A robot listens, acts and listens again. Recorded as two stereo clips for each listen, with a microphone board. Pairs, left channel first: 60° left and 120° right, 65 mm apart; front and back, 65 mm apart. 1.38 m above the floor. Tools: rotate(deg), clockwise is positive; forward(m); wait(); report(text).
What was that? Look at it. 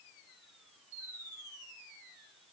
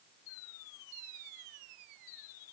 wait()
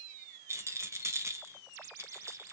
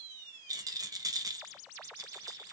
rotate(165)
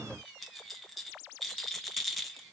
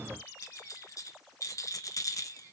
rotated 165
rotate(30)
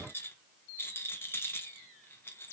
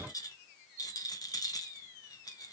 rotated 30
rotate(-10)
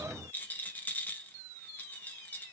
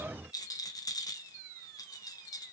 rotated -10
report("Found it: a rattle, straight ahead.")